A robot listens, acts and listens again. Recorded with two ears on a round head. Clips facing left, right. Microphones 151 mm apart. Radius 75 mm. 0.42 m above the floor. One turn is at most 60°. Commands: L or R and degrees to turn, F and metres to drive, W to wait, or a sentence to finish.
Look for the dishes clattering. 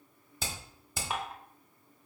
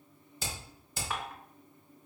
L20
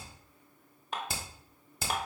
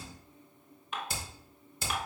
L60
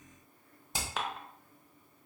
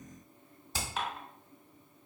L60
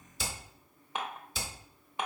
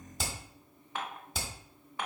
L20
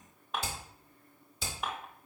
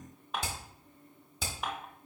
Facing the dishes clattering, under 1 m away.